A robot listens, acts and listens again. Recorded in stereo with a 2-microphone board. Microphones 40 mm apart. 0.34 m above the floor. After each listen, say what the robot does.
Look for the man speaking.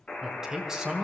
Turn 15° right.
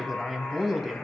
Turn 30° right.
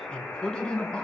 Turn 20° left.
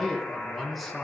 Facing the man speaking.